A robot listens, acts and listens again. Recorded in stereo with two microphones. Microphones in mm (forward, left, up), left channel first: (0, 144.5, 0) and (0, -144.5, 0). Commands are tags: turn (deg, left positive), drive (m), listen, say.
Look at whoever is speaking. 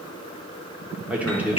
<turn deg="-30"/>
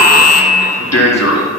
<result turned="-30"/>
<listen/>
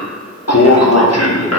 <listen/>
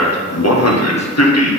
<say>I heard a man speaking, but can't make it out now. It was about 25° left or 145° right.</say>